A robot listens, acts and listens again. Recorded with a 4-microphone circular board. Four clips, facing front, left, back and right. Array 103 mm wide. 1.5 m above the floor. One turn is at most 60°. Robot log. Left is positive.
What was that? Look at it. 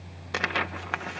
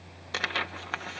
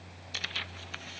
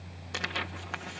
note: The tearing paper: 15° left.
cmd yaw +15
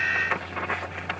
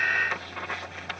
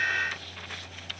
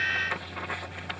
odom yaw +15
end: Found it: tearing paper, straight ahead.